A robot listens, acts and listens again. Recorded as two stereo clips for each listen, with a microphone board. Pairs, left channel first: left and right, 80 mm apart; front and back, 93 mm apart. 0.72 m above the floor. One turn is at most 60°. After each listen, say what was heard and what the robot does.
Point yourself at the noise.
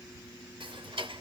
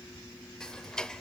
The ticking: 85° right. Turn 60° right.
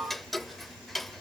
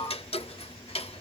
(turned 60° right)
Found it: ticking, straight ahead.